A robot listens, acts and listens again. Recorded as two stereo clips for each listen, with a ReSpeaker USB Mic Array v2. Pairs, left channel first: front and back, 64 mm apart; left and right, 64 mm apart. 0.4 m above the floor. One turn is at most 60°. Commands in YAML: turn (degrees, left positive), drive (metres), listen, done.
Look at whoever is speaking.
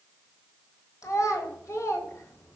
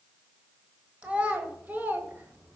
turn: -35
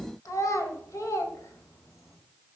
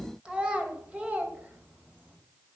turn: -25
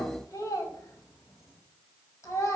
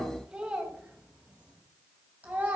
turn: -30
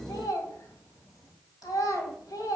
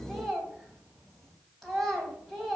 done: "Facing the child speaking, 2 to 4 m away."